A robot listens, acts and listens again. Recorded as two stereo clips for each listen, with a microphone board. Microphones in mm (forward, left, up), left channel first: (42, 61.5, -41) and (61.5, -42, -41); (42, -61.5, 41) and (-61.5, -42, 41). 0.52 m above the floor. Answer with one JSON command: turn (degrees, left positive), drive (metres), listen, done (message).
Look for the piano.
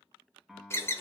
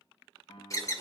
{"done": "Facing the piano, 1 to 2 m away."}